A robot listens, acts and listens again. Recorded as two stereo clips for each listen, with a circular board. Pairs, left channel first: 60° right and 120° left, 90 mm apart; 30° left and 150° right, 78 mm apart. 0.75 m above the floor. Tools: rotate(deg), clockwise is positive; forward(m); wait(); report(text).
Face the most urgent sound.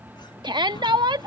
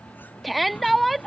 rotate(-120)
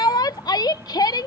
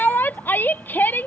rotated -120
rotate(30)
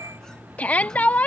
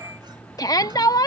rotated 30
rotate(-10)
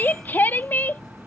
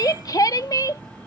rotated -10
report("Facing the shout.")